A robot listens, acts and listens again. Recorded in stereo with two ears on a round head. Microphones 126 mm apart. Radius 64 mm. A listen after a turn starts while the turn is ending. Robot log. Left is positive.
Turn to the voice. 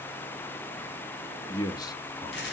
note: The man speaking: about 30° left or 150° left.
cmd yaw +30
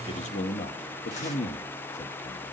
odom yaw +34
note: So it is at 115° left.
cmd yaw +115
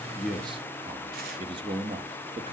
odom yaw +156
note: The man speaking is now 40° right.
cmd yaw -40
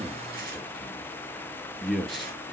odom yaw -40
end: Facing the man speaking, 1 to 2 m away.